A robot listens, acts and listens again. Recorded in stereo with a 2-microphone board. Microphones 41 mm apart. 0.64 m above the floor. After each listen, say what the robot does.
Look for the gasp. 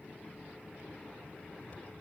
Keep listening.
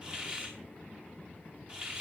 Keep listening.
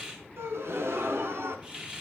Turn 70° right.
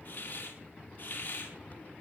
Keep listening.
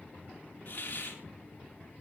I heard a gasp, but can't make it out now. It was about straight ahead or 40° right.